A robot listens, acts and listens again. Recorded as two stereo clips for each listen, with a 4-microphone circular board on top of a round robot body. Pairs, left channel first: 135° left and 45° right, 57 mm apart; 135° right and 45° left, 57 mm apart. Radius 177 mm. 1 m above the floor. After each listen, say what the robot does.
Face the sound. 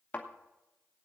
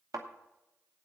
Turn 70° left.
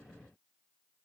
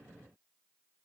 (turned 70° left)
I heard a thud from this way, but can't make it out now.